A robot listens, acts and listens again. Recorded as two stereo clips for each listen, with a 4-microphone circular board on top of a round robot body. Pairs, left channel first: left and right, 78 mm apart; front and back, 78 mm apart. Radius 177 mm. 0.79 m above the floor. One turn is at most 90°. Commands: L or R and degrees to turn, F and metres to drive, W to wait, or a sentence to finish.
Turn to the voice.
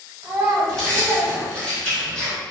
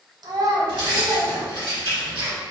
R90
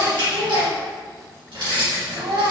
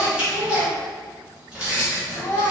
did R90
R65
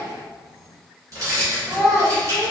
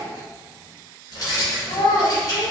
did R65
Found it: a child speaking, straight ahead.